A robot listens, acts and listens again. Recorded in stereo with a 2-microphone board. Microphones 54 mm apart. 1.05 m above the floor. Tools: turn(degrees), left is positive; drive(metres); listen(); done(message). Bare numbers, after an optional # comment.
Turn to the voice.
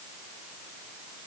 listen()
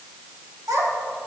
turn(-90)
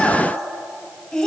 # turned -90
# So it is at 10° left.
turn(10)
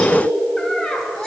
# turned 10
# The child speaking is now 10° left.
turn(10)
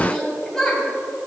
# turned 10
# The child speaking is now 10° left.
turn(10)
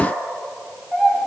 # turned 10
done("Found it: a child speaking, straight ahead, 2 to 4 m away.")